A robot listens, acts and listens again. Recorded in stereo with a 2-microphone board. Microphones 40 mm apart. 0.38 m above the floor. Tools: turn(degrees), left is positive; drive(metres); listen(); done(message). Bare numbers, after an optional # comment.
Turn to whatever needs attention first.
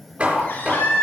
# The baby crying: about 60° left or 120° left.
turn(60)
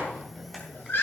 # So it is at 60° left.
turn(60)
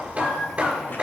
done("Facing the baby crying, over 4 m away.")